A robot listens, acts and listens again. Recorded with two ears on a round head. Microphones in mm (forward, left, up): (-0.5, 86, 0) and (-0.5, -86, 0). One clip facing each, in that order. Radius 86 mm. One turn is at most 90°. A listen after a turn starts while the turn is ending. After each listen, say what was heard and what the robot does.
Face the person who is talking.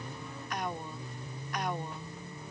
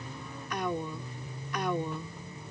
Turn 90° right.
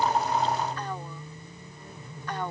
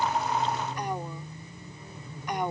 So it is at 15° right. Turn 15° right.
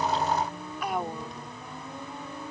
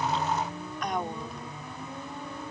Facing the woman speaking.